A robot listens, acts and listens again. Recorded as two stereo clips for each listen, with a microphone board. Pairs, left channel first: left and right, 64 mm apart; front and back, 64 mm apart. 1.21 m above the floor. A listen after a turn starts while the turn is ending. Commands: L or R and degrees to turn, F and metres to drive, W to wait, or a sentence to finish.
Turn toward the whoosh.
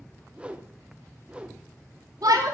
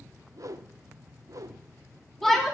R160
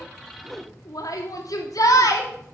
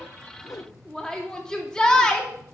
Found it: a whoosh, straight ahead, under 1 m away.